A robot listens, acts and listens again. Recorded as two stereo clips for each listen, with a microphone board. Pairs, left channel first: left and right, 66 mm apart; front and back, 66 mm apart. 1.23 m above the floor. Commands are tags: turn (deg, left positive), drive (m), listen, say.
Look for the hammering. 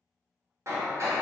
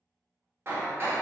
<turn deg="-130"/>
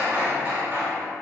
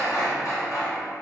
<turn deg="-30"/>
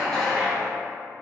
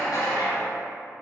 <turn deg="10"/>
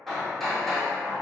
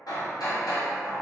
<say>Facing the hammering, under 1 m away.</say>